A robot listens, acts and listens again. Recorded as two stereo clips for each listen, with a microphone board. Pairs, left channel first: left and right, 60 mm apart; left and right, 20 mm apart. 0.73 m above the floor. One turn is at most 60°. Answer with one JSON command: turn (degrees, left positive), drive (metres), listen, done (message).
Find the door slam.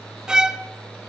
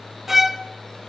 {"listen": true}
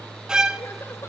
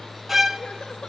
{"listen": true}
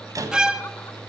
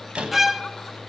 {"turn": -60}
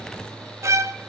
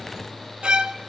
{"turn": -30}
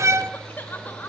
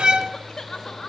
{"done": "Facing where the door slam came from. I can't hear it now."}